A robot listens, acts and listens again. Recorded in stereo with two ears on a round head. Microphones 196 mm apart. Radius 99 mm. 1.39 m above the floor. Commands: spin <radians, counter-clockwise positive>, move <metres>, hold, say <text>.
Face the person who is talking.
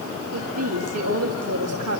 spin -1.31
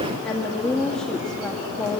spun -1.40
say Found it: a woman speaking, straight ahead, 1 to 2 m away.